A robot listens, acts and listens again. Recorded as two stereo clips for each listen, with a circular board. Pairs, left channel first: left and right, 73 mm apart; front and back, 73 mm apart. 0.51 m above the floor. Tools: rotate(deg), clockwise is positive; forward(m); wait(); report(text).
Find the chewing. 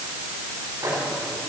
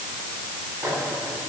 wait()
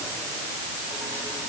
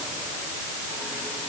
wait()
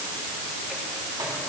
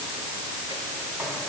report("I can't make out chewing to turn to.")